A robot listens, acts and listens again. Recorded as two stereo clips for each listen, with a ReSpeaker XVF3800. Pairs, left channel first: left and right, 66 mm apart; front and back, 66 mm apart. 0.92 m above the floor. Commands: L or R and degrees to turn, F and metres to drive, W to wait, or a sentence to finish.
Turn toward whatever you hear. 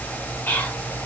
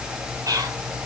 L150
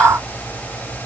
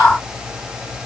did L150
W
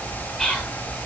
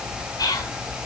Facing the whispering, 2 to 4 m away.